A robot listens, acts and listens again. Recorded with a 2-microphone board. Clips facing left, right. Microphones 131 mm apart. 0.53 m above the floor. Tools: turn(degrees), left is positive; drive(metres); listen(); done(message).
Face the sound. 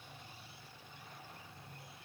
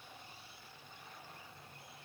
listen()
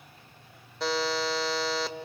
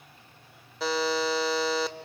turn(degrees=30)
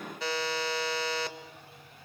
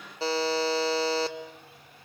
turn(degrees=-30)
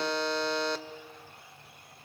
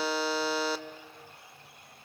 done("Facing the buzzer, 1 to 2 m away.")